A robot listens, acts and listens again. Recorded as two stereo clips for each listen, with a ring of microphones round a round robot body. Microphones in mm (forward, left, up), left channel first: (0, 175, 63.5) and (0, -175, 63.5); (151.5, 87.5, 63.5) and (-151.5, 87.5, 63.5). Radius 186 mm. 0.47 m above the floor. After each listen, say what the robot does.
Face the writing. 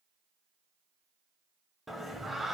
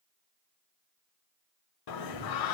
Keep listening.
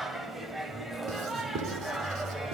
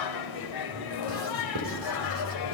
Turn 145° right.
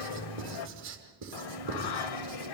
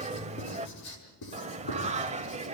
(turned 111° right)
Turn 35° right.
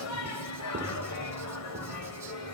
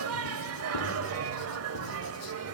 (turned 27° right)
Keep listening.
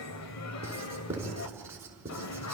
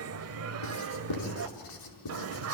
Found it: writing, straight ahead.